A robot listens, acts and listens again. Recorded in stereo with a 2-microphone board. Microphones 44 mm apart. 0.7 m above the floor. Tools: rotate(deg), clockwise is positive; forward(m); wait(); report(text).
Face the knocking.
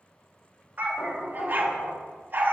rotate(-90)
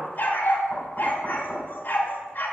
rotate(-10)
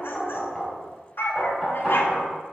report("Facing the knocking, 2 to 4 m away.")